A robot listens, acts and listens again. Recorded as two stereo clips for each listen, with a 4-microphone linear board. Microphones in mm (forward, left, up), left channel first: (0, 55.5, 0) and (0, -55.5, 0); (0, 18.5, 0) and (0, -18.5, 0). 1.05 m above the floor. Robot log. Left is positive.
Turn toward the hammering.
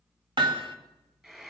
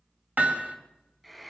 note: The hammering: about 50° right or 130° right.
cmd yaw -50
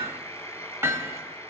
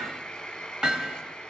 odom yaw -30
note: So it is at 25° right.
cmd yaw -25
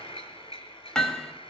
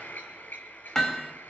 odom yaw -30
end: Facing the hammering.